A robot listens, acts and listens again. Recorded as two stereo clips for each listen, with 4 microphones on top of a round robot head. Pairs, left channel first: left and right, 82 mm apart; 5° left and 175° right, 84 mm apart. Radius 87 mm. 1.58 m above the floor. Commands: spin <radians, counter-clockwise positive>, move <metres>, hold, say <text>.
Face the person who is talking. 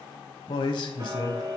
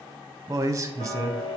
spin 2.27
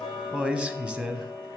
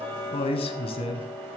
spin -0.17
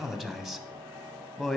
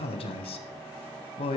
say Facing the man speaking.